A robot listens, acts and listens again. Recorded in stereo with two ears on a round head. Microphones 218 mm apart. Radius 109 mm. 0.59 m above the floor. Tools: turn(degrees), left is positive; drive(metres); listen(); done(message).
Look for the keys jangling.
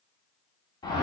listen()
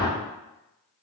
listen()
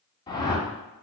done("I can't make out keys jangling, only a whoosh.")